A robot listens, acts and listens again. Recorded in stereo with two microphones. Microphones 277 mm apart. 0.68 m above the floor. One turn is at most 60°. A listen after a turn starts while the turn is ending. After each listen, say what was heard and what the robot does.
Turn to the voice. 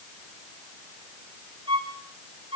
Keep listening.
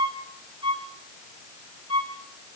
Keep listening.
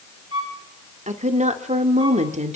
The woman speaking: about 25° right or 155° right. Turn 25° right.
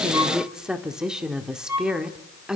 Found it: a woman speaking, straight ahead.